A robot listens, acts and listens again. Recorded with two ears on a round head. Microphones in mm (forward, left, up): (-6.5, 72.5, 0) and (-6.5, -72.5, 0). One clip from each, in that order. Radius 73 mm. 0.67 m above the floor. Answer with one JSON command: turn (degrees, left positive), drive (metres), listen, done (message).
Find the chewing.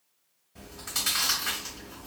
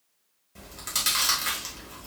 {"turn": -40}
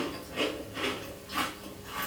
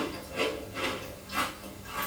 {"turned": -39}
{"done": "Found it: chewing, straight ahead, 1 to 2 m away."}